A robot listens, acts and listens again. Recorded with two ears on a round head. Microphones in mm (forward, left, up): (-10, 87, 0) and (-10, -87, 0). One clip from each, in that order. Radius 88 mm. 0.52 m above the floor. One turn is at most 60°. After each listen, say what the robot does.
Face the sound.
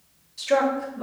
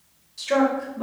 Turn 30° right.
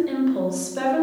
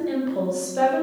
Turn 10° left.
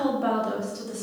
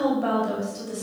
Found it: a woman speaking, straight ahead.